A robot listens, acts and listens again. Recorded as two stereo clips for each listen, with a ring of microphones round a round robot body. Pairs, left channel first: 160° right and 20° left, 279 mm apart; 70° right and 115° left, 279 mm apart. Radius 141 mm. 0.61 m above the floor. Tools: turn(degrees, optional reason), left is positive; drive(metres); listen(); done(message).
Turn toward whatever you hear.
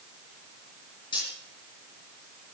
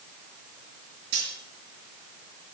turn(degrees=130, reason="The cutlery clinking: 130° left.")
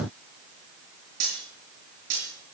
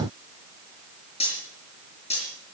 done("Facing the cutlery clinking, over 4 m away.")